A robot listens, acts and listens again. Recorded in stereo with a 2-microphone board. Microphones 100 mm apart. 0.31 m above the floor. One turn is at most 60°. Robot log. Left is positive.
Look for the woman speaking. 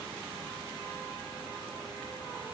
cmd idle
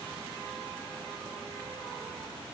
cmd idle
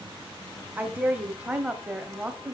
cmd yaw -30
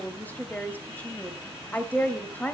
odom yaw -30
note: So it is at 15° left.
cmd yaw +15
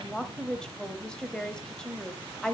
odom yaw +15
end: Facing the woman speaking, 1 to 2 m away.